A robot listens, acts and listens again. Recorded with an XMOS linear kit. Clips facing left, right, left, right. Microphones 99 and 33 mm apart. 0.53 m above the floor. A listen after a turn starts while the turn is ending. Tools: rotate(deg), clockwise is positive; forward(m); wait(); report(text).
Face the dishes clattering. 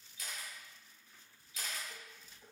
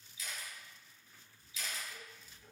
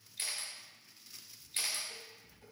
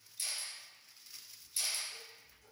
rotate(-50)
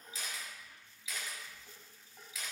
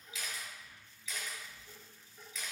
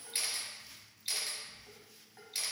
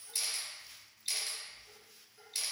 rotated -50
rotate(-80)
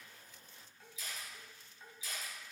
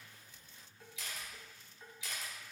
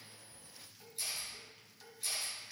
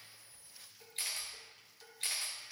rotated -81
report("Facing the dishes clattering.")